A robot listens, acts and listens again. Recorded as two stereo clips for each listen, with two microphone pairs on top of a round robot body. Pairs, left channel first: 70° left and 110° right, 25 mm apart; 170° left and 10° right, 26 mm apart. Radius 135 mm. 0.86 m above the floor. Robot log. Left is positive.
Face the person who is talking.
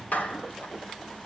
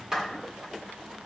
cmd idle
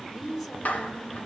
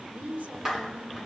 note: The woman speaking: 15° right.
cmd yaw -15
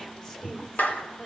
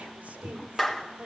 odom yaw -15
cmd idle
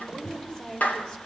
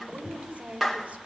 end: Facing the woman speaking.